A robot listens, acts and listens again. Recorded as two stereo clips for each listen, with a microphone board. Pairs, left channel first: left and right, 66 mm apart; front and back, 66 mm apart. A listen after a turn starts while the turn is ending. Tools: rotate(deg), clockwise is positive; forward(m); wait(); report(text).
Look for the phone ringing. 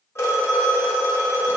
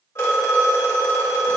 rotate(-45)
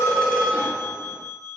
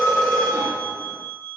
report("Facing the phone ringing.")